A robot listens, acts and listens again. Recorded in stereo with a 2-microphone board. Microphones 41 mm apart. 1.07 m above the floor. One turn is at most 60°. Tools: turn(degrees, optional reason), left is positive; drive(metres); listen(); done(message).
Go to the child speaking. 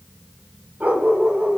listen()
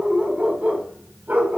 listen()
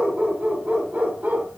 done("I can't make out a child speaking, only a dog barking.")